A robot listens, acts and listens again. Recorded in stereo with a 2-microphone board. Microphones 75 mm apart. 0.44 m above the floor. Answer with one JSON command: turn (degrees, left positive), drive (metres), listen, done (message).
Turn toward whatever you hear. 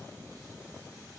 {"listen": true}
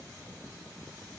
{"listen": true}
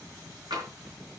{"turn": -90}
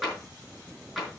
{"turn": -10}
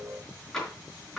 {"done": "Found it: tapping, straight ahead."}